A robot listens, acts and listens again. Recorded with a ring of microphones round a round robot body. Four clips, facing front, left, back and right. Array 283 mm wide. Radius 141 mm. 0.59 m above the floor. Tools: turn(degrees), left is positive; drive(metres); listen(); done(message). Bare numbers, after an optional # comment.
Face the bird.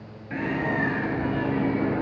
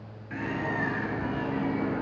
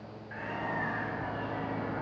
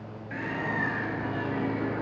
done("Facing the bird, 2 to 4 m away.")